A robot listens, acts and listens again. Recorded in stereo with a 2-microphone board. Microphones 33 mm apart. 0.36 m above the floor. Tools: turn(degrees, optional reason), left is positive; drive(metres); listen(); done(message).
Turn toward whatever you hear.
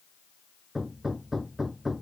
turn(degrees=-30)
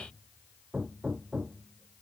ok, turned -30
turn(degrees=-140, reason="So it is at 140° right.")
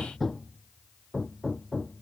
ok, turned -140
turn(degrees=10, reason="The hammering is now 10° left.")
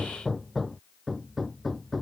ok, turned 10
done("Found it: hammering, straight ahead.")